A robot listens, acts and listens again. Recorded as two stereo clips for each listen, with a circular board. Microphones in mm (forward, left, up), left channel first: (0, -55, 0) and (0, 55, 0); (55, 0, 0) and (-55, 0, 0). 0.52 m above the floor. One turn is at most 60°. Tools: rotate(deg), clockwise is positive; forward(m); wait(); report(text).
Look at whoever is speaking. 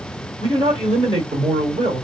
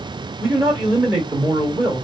rotate(-60)
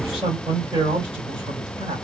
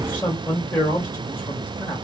rotate(-60)
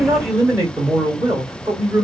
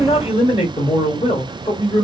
rotate(-30)
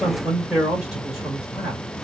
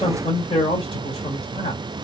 report("Found it: a man speaking, straight ahead.")